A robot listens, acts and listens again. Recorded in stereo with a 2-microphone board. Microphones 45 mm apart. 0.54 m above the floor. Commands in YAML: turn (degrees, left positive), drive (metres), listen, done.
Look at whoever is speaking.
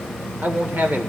turn: -40
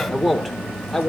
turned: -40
done: "Facing the man speaking, 1 to 2 m away."